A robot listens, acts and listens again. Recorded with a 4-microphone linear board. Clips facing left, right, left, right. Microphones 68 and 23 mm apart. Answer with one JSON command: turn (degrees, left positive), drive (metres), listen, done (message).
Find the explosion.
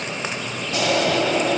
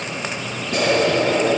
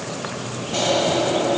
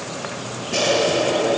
{"turn": -65}
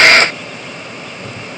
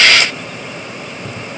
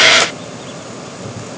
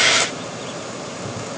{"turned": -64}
{"listen": true}
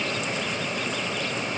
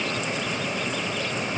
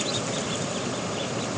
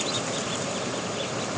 {"done": "I heard an explosion, but can't make it out now. It was about straight ahead or 50° right."}